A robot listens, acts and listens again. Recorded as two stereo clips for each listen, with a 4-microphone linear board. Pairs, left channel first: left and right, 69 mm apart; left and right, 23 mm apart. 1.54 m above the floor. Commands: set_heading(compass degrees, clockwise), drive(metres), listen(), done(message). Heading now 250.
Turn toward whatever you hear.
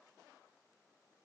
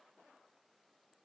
listen()
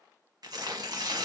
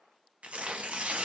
set_heading(315)
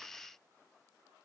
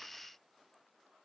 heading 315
listen()
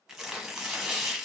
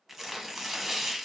done("Found it: tearing paper, straight ahead, under 1 m away.")